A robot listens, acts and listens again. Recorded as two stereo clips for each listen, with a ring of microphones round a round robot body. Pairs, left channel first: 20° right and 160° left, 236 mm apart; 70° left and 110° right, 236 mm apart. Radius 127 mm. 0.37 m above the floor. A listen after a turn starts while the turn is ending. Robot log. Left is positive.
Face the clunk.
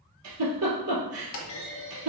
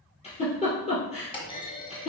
end: Facing the clunk.